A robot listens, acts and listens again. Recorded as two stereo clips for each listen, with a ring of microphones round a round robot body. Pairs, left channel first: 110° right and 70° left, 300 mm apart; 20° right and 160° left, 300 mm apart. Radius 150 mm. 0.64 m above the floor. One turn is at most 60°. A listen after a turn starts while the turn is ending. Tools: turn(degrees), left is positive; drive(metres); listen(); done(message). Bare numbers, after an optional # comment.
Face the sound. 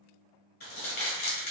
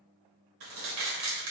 # The crumpling: 175° right.
turn(-60)
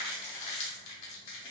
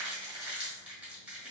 # The crumpling is now 115° right.
turn(-60)
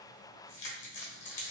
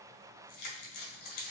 # The crumpling is now 55° right.
turn(-55)
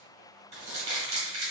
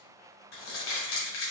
done("Facing the crumpling, 1 to 2 m away.")